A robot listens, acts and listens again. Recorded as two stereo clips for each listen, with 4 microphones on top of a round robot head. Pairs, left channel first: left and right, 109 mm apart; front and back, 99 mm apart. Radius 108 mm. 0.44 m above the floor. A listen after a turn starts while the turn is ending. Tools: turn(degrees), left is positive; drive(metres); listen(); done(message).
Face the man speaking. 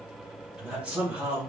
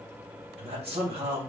turn(degrees=-170)
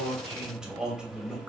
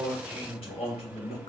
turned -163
done("Found it: a man speaking, straight ahead.")